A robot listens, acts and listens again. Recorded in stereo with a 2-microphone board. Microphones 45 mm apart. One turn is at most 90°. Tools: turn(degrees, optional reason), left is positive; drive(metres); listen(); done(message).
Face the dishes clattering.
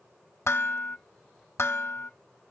turn(degrees=70, reason="The dishes clattering: about 70° left or 110° left.")
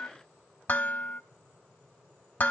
turn(degrees=40, reason="So it is at 40° left.")
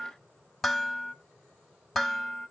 done("Found it: dishes clattering, straight ahead.")